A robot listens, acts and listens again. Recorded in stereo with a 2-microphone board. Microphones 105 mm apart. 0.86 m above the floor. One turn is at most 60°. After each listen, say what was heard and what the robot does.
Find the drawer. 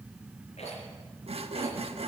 Keep listening.
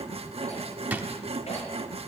The drawer: about 15° right or 165° right. Turn 15° right.
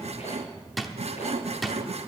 Found it: a drawer, straight ahead, 1 to 2 m away.